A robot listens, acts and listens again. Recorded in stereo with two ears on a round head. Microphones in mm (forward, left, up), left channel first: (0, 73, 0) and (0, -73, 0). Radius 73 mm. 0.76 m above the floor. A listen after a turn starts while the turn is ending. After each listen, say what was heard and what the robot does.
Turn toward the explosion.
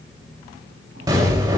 The explosion: about 25° right or 155° right. Turn 25° right.
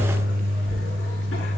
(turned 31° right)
Keep listening.
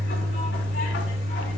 I heard an explosion, but can't make it out now. It was about 10° left or 125° right.